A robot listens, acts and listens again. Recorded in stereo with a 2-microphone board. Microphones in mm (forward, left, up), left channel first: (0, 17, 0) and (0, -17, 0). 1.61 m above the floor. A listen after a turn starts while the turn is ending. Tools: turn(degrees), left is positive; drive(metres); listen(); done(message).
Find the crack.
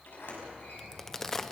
turn(degrees=30)
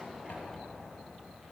listen()
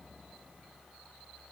done("I heard a crack, but can't make it out now. It was about 20° right or 140° left.")